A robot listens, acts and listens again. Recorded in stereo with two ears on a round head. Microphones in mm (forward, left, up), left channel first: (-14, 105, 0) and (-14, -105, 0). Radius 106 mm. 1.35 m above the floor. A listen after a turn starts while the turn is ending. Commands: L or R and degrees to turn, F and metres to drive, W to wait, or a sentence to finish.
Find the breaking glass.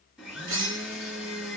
R60
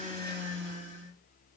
W
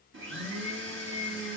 I heard breaking glass, but can't make it out now. It was about straight ahead or 60° right.